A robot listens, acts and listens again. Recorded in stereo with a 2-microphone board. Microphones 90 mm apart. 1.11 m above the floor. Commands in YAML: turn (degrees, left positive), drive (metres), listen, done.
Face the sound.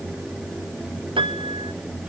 turn: -70
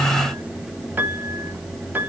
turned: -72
turn: -20
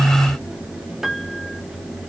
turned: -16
done: "Facing the piano, 1 to 2 m away."